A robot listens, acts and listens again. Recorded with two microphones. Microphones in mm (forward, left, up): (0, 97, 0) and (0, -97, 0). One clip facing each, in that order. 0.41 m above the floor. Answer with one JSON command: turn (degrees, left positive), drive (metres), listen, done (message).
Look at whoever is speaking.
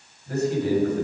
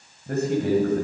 {"turn": -60}
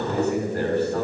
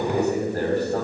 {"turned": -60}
{"turn": -45}
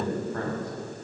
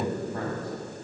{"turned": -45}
{"turn": -15}
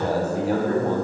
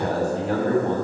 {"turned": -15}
{"done": "Facing the man speaking."}